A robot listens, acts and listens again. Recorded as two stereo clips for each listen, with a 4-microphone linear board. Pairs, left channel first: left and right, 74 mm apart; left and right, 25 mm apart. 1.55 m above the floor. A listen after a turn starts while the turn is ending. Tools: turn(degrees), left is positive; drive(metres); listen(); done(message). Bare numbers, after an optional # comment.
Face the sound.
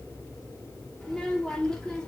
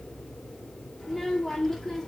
turn(30)
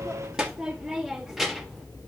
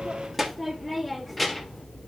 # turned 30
turn(-30)
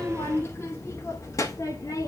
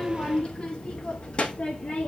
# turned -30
# So it is at 50° left.
turn(50)
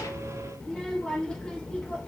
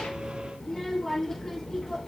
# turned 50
# The child speaking is now 15° left.
turn(15)
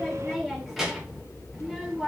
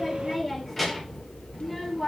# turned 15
done("Facing the child speaking, 1 to 2 m away.")